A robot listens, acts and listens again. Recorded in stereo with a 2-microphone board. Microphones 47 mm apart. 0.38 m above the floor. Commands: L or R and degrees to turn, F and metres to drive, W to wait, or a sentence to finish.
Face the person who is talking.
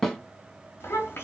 L60
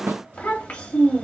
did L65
L35
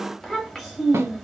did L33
Found it: a child speaking, straight ahead, 1 to 2 m away.